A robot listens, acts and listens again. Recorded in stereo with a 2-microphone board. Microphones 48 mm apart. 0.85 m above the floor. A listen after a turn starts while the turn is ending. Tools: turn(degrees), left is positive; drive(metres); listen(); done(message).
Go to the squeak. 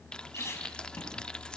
turn(degrees=90)
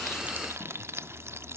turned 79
turn(degrees=10)
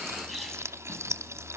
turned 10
drive(metres=1.0)
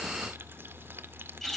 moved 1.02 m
drive(metres=1.0)
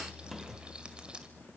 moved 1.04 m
listen()
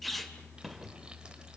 drive(metres=1.0)
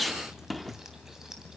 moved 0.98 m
drive(metres=1.0)
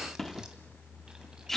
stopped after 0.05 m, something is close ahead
done("Arrived at the squeak, straight ahead.")